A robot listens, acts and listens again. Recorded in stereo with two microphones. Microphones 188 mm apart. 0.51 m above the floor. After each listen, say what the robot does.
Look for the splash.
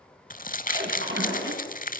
Turn 90° right.
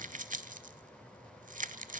Facing where the splash came from. I can't hear it now.